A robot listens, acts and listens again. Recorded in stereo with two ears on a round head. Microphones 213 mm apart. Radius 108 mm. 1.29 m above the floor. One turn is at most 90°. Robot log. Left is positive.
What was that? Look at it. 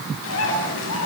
note: The bird: about 55° left or 125° left.
cmd yaw +55
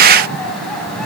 end: Facing the bird, over 4 m away.